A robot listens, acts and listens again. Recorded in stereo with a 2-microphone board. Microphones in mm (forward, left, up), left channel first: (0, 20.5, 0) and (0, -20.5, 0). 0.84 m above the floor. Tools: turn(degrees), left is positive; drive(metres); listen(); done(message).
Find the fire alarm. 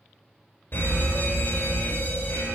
turn(degrees=60)
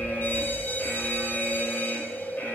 turn(degrees=60)
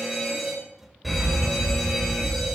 done("Found it: a fire alarm, straight ahead, over 4 m away.")